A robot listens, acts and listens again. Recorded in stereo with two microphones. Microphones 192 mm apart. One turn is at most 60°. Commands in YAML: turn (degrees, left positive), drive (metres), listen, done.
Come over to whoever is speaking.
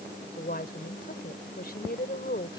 turn: 50
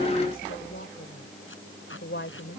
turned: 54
turn: 60
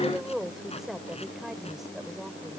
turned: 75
drive: 1.0
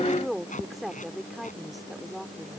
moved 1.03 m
drive: 1.0
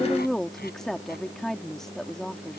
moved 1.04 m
drive: 1.0
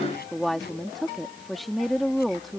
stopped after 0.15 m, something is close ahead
done: "Arrived at the woman speaking, straight ahead."